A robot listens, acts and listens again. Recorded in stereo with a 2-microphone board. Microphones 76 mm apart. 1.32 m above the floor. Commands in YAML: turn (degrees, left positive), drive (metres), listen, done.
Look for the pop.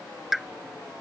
turn: 30
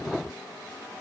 listen: true
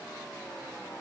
done: "I heard a pop, but can't make it out now. It was about 30° right or 150° left."